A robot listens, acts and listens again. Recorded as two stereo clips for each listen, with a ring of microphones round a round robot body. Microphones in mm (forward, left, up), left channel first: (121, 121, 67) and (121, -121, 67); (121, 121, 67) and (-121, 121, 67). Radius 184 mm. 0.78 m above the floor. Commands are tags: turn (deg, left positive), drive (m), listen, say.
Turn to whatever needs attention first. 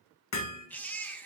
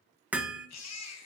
<say>Found it: a baby crying, straight ahead, 1 to 2 m away.</say>